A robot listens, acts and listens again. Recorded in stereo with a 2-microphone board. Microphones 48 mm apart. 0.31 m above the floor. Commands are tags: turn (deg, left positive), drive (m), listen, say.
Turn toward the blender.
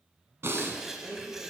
<turn deg="-60"/>
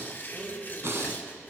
<say>Found it: a blender, straight ahead, 2 to 4 m away.</say>